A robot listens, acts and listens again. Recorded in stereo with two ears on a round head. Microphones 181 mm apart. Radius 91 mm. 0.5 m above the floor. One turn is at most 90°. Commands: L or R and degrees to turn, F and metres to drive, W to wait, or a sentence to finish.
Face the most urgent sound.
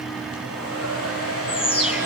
L30
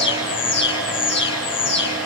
L90
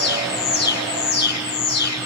L50
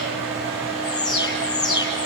L20
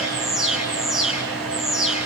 Found it: an alarm, straight ahead.